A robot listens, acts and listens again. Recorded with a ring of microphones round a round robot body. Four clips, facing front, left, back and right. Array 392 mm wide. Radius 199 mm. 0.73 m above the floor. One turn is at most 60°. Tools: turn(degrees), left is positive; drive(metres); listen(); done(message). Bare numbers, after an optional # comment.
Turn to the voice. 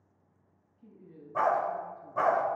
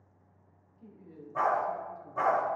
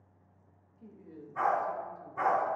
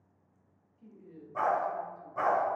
# The woman speaking: 160° left.
turn(60)
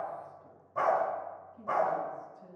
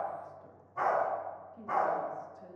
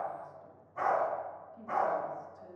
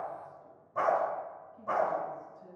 # The woman speaking is now 110° left.
turn(60)
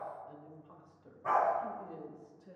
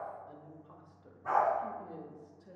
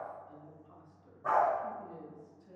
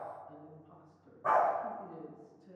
# The woman speaking is now 55° left.
turn(55)
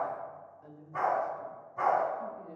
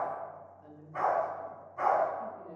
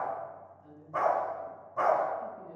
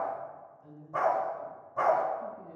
# The woman speaking is now 25° left.
turn(25)
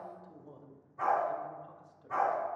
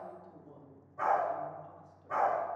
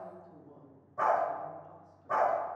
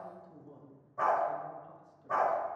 done("Facing the woman speaking, 1 to 2 m away.")